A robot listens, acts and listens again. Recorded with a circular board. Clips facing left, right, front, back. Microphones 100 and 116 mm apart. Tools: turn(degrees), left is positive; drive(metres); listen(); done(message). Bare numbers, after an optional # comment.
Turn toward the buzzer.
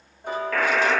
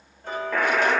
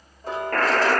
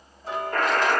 # The buzzer: 15° right.
turn(-15)
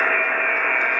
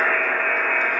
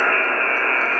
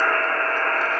done("Facing the buzzer, 2 to 4 m away.")